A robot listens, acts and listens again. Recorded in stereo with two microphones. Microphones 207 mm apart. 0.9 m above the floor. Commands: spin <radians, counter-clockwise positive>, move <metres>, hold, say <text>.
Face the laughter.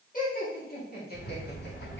spin 0.87
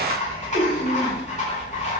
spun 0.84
spin 0.52
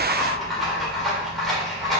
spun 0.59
hold
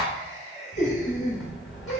spin 0.61
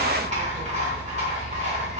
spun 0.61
hold
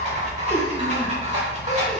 hold
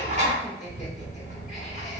say I heard laughter from this way, but can't make it out now.